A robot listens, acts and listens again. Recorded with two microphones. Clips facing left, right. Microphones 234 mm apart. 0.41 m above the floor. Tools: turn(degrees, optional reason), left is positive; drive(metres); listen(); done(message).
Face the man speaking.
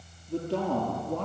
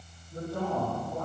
turn(degrees=90)
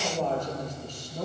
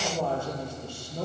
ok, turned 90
turn(degrees=-10, reason="So it is at 10° right.")
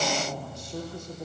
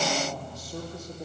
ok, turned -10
done("Found it: a man speaking, straight ahead.")